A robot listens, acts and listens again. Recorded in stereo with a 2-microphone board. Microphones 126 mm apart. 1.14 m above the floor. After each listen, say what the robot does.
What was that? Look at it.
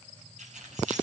Turn 75° right.
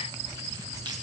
Keep listening.
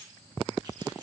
Keep listening.
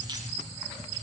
I heard keys jangling, but can't make it out now. It was about straight ahead or 30° right.